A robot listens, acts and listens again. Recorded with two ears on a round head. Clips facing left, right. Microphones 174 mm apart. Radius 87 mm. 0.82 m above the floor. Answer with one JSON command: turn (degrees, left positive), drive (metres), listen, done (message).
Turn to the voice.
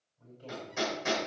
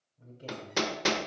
{"turn": -30}
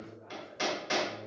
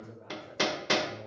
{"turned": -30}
{"turn": -120}
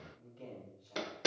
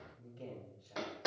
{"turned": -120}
{"turn": -10}
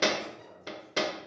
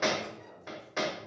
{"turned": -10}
{"done": "Facing the man speaking."}